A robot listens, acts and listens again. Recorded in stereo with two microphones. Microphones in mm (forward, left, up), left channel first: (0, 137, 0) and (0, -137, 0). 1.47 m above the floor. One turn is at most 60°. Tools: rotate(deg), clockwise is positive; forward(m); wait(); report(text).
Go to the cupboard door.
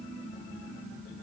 wait()
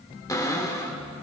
rotate(-30)
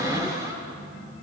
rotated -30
rotate(15)
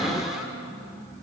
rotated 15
forward(1.0)
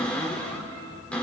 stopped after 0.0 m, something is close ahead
report("Something is in my way. I am facing the cupboard door but have not reached it.")